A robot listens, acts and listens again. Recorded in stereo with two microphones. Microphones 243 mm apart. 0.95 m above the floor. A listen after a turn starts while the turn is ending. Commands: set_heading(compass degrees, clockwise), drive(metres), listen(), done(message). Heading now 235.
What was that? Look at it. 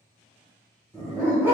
set_heading(265)
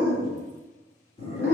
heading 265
set_heading(235)
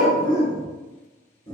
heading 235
set_heading(215)
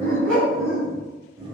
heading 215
done("Found it: a dog barking, straight ahead.")